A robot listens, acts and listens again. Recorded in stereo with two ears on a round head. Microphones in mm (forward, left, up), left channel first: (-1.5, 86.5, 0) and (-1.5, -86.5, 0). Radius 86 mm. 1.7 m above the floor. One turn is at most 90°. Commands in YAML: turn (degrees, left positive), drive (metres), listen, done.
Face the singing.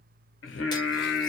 turn: 70
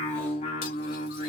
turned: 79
turn: 45
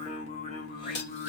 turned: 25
turn: 50
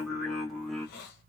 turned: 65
done: "Found it: singing, straight ahead."